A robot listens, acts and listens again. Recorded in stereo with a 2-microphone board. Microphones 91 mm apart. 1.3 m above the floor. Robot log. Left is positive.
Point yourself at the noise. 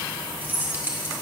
note: The keys jangling: about 20° right or 160° right.
cmd yaw -20
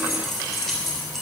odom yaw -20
end: Found it: keys jangling, straight ahead, 2 to 4 m away.